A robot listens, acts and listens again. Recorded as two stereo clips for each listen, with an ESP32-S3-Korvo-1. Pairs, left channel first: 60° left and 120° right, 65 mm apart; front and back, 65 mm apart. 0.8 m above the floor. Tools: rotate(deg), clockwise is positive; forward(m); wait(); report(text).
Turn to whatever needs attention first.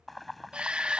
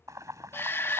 rotate(50)
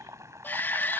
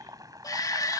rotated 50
report("Facing the shout.")